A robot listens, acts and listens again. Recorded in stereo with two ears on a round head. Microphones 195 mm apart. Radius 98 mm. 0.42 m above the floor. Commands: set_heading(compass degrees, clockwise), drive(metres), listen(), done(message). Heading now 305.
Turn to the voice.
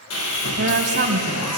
set_heading(350)
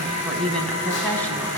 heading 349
done("Found it: a woman speaking, straight ahead, 2 to 4 m away.")